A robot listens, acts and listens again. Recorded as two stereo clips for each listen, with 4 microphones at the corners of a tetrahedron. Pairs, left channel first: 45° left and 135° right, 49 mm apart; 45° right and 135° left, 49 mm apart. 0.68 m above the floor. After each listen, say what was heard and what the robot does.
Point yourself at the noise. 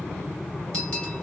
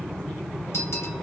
The bell: 25° right. Turn 25° right.
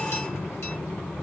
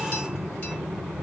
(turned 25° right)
Keep listening.
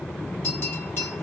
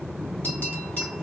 The bell is now 10° left. Turn 10° left.
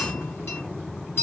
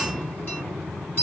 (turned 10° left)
Facing the bell.